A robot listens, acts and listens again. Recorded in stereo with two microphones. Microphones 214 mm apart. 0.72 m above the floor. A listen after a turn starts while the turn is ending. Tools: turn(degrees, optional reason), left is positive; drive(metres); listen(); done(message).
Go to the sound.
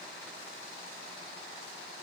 listen()
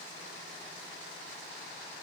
listen()
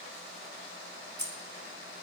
turn(degrees=-50, reason="The keys jangling: about 50° right or 130° right.")
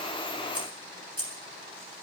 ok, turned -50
turn(degrees=-80, reason="So it is at 80° right.")
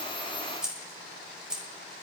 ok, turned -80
drive(metres=1.0)
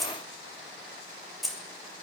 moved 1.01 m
drive(metres=1.0)
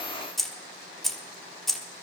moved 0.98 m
drive(metres=1.0)
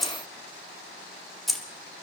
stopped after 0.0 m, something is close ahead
done("I am next to the keys jangling.")